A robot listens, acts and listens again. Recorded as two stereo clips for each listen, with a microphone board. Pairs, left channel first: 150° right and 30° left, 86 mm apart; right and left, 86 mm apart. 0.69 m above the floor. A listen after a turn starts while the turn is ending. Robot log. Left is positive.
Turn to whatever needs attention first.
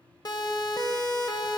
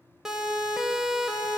note: The siren: 175° left.
cmd yaw +175
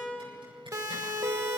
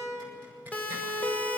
note: The siren is now 20° right.
cmd yaw -20
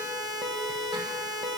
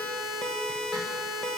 end: Found it: a siren, straight ahead, 2 to 4 m away.